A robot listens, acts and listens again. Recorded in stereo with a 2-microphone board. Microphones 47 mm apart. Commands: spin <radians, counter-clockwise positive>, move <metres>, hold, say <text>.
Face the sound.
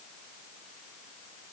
hold
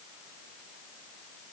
hold
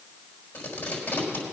spin 0.96
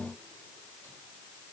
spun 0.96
hold
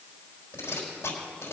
spin 1.22
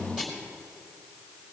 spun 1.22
spin -0.26
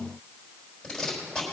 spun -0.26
say Facing the tape being pulled.